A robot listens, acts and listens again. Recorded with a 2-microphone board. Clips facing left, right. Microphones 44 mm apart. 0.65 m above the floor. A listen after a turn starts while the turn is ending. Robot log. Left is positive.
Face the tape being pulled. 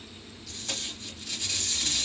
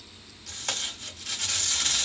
cmd yaw -90
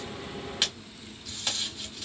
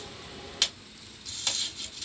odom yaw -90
note: So it is at 10° left.
cmd yaw +10
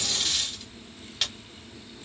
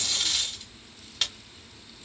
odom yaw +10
end: Found it: tape being pulled, straight ahead.